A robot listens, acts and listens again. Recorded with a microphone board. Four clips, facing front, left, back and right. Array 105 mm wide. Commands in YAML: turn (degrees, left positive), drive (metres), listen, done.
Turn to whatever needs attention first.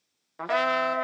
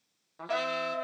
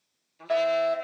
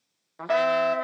turn: -80
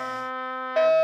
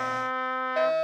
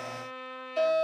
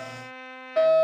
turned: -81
done: "Facing the fire alarm, 2 to 4 m away."